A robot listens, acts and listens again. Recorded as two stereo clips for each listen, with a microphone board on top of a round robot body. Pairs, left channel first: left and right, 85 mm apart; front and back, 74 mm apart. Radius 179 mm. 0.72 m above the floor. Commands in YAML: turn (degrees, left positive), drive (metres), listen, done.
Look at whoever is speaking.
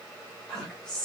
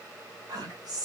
turn: 170
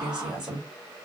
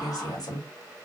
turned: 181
turn: -10
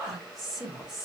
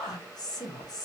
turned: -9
done: "Found it: a woman speaking, straight ahead, 1 to 2 m away."